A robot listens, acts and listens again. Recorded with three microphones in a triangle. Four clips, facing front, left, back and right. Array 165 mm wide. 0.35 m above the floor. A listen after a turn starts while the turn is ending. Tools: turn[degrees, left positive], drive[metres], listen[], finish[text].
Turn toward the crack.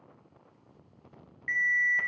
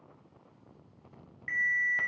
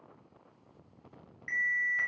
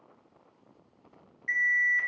Action: listen[]
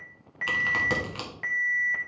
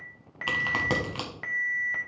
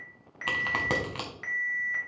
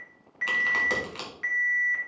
Thought: The crack: 145° left.
Action: turn[145]
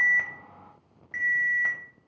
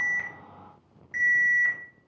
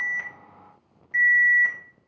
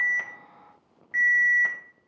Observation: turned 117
Thought: Nothing new. It was at 25° left.
Action: turn[25]
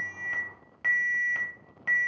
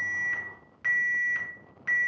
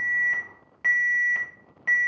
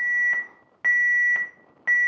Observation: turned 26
Action: finish[I heard a crack from this way, but can't make it out now.]